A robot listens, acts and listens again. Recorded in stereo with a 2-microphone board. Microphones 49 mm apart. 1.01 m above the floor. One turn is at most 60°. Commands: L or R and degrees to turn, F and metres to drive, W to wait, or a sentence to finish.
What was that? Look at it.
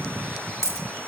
L60
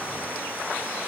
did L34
W
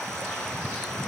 I heard a dropped coin, but can't make it out now. It was about 40° left or 70° left.